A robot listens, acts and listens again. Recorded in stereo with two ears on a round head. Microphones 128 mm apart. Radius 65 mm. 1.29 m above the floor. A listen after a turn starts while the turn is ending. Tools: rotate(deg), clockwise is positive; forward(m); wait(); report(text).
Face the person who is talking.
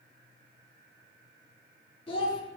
rotate(-35)
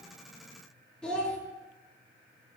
report("Found it: a child speaking, straight ahead, 1 to 2 m away.")